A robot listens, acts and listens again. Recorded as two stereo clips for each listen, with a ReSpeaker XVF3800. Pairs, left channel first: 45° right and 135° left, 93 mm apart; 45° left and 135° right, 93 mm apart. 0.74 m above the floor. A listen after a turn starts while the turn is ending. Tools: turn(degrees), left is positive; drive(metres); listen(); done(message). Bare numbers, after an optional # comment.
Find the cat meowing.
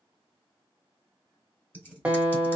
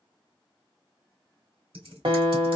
listen()
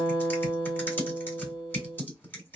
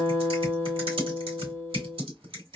listen()
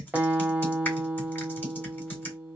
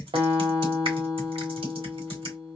done("I can't make out a cat meowing, only a guitar and typing on a keyboard.")